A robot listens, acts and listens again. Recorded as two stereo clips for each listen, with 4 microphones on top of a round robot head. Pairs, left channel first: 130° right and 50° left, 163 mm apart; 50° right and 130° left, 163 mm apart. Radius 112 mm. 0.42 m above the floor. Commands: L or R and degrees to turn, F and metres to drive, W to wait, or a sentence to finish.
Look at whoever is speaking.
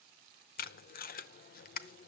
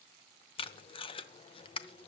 W
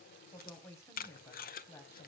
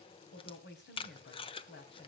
R55
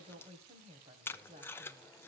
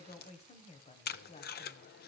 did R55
Facing the woman speaking, 2 to 4 m away.